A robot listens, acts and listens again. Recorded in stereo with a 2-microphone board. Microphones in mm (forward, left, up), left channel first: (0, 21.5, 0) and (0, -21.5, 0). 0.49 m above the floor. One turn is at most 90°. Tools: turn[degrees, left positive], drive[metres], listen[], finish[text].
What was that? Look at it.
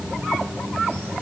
Action: listen[]
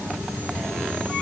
Action: listen[]
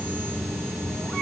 Action: finish[I can't make out anything.]